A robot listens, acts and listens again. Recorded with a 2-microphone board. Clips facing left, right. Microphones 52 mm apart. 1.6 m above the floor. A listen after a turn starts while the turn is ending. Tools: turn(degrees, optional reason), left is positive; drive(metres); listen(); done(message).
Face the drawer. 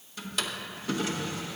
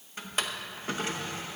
turn(degrees=-30, reason="The drawer: about 30° right or 150° right.")
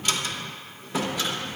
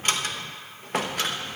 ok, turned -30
turn(degrees=-110, reason="So it is at 110° right.")
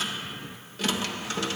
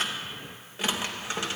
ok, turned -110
turn(degrees=-25, reason="The drawer is now 25° right.")
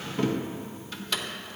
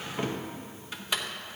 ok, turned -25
turn(degrees=-20, reason="The drawer is now 20° right.")
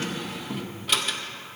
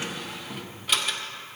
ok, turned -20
done("Facing the drawer.")